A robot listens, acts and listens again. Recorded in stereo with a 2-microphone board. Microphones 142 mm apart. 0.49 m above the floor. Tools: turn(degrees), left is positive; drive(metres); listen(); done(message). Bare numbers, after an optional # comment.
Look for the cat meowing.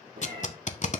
turn(-90)
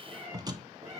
# So it is at 25° right.
turn(-25)
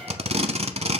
listen()
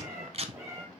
# The cat meowing is now 25° right.
turn(-25)
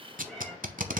done("Facing the cat meowing, 2 to 4 m away.")